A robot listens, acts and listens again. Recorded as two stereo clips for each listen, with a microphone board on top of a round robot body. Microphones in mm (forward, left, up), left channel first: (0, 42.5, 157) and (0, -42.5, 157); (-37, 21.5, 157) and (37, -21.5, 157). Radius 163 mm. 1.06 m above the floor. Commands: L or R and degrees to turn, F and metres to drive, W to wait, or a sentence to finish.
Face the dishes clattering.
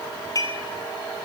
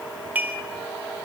L40
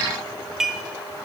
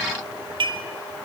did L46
Found it: dishes clattering, straight ahead.